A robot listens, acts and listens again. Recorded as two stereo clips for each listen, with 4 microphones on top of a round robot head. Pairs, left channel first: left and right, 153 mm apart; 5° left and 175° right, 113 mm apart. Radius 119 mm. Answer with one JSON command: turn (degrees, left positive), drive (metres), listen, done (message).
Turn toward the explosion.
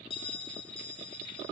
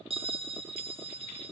{"listen": true}
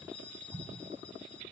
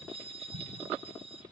{"turn": -175}
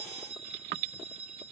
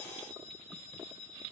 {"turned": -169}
{"done": "Facing where the explosion came from. I can't hear it now."}